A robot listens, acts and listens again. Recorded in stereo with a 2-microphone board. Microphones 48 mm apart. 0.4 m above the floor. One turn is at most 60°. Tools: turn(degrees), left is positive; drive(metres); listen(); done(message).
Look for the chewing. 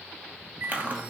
turn(degrees=-35)
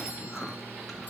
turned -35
listen()
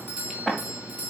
done("Found it: chewing, straight ahead, 1 to 2 m away.")